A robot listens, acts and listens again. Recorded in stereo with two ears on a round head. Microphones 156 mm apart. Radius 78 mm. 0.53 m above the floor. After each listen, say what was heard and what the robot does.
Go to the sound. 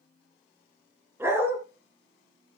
Turn 30° right.
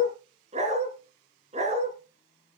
So it is at 140° right. Turn 140° right.
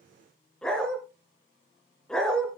Drive 1.0 m forward.
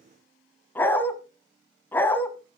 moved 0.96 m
The dog barking is now 10° left. Turn 10° left.
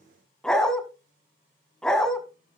Drive 1.0 m forward.
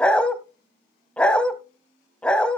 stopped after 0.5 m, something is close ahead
Arrived at the dog barking, straight ahead.